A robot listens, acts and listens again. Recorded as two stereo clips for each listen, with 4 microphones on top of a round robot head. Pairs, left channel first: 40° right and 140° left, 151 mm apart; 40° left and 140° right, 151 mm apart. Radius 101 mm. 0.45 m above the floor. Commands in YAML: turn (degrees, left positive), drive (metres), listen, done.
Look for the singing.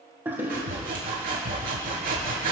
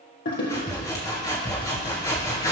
listen: true
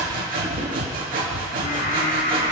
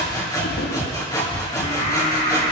turn: -15
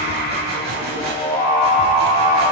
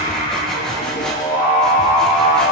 done: "Facing the singing."